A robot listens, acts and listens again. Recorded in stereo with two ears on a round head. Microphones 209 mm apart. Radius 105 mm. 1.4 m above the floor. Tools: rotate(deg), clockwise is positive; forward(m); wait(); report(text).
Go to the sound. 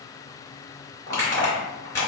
rotate(-30)
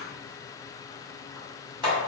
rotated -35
rotate(20)
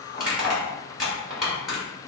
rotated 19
forward(1.0)
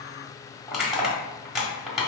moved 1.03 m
forward(1.0)
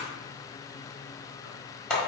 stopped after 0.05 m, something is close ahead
report("I am next to the crushing.")